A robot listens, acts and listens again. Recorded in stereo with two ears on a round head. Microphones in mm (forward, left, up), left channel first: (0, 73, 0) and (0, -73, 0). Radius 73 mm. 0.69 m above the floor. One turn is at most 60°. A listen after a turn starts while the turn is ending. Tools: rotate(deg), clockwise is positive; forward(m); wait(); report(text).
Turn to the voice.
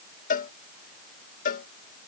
wait()
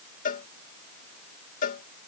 wait()
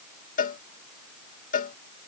report("I can't make out anyone speaking, only a cowbell.")